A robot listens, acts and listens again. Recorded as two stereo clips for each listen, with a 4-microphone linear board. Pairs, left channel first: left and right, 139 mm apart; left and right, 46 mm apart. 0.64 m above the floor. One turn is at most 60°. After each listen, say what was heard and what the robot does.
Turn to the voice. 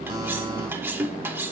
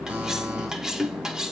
Keep listening.
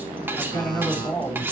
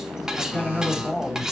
The man speaking: about 15° left or 165° left. Turn 15° left.
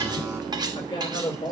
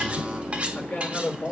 The man speaking: about 40° left or 140° left. Turn 40° left.
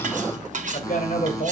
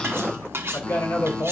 So it is at 110° left. Turn 60° left.
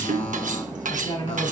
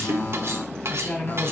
The man speaking is now 40° left. Turn 40° left.
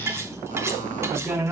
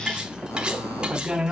The man speaking is now 10° right. Turn 10° right.
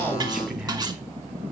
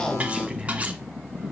Facing the man speaking.